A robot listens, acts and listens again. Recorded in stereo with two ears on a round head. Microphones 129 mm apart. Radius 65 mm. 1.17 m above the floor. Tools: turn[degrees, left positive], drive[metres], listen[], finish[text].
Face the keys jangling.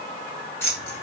Thought: The keys jangling: about 20° left or 160° left.
Action: turn[20]
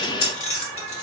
Thought: So it is at 130° left.
Action: turn[130]
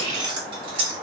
Thought: The keys jangling is now 35° right.
Action: turn[-35]
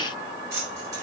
Thought: The keys jangling is now 20° right.
Action: turn[-20]
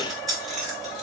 Action: finish[Facing the keys jangling, 2 to 4 m away.]